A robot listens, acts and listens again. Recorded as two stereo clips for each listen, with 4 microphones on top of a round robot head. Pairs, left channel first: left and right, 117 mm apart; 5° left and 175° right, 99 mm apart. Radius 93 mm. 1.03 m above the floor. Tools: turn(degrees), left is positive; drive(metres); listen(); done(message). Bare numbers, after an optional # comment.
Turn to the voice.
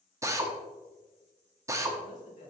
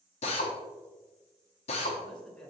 # The man speaking: 85° left.
turn(85)
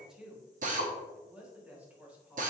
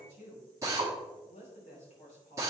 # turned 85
# The man speaking is now 15° right.
turn(-15)
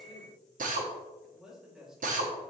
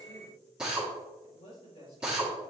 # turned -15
done("Found it: a man speaking, straight ahead, 2 to 4 m away.")